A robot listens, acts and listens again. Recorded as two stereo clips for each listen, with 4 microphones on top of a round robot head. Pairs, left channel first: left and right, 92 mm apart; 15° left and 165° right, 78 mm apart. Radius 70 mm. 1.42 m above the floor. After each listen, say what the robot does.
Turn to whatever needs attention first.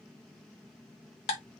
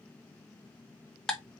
Keep listening.
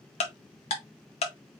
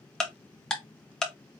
Keep listening.
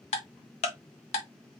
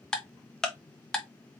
I can't make out anything urgent to turn to.